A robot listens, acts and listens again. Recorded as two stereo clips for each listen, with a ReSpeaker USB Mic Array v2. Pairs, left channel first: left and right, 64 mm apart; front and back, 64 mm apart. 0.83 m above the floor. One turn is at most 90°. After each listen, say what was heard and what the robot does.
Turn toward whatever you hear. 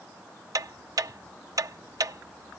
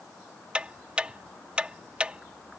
The ticking: 110° right. Turn 90° right.
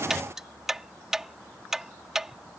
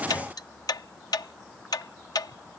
Found it: ticking, straight ahead.